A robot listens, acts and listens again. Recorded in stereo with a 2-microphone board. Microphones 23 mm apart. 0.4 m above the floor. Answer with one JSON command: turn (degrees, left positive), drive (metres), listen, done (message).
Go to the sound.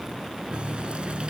{"turn": -50}
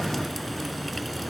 {"drive": 1.0}
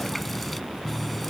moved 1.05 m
{"drive": 1.0}
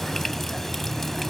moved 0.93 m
{"turn": 10}
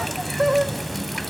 {"drive": 1.0}
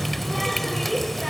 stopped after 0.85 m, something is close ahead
{"done": "Arrived at the running tap, straight ahead."}